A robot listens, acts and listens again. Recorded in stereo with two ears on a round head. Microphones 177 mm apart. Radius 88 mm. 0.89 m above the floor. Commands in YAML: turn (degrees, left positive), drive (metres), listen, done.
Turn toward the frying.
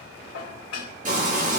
turn: -45
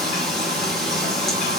done: "Facing the frying."